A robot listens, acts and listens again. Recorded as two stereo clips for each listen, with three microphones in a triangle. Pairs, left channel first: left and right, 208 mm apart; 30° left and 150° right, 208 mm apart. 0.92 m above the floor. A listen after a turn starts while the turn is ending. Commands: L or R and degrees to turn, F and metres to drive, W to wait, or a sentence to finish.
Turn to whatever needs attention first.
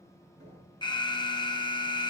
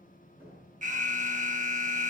L160
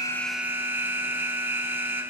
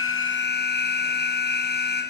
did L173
R10
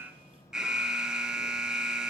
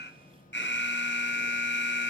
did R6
Found it: an alarm, straight ahead, under 1 m away.